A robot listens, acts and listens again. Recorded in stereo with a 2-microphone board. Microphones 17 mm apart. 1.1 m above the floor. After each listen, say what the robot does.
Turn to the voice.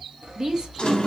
Turn 45° right.
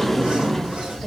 Keep listening.
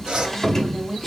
Found it: a woman speaking, straight ahead.